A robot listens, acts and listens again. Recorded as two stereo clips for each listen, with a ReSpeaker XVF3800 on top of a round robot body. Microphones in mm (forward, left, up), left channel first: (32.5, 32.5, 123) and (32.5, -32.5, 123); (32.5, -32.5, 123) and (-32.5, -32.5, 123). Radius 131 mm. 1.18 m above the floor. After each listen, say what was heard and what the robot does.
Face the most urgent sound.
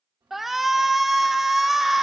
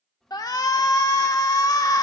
Facing the shout, 1 to 2 m away.